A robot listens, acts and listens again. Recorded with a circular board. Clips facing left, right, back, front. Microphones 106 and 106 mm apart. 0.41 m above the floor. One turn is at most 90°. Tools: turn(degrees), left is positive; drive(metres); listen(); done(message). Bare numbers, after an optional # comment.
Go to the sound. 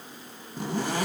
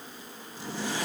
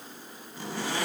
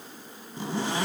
# The zipper: 65° left.
turn(65)
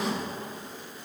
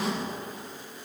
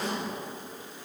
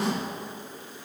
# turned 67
drive(1.0)
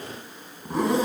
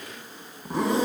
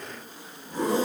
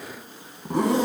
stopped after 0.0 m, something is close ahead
done("Something is in my way. I am facing the zipper but have not reached it.")